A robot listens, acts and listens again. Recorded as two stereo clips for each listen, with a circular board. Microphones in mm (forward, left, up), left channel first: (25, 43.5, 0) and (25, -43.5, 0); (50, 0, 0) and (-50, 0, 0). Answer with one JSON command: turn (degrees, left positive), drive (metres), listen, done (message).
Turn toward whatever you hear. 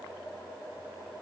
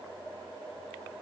{"listen": true}
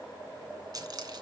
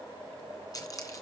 {"turn": -50}
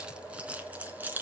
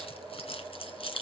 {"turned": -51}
{"turn": -20}
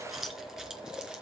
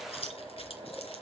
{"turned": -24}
{"done": "Facing the keys jangling."}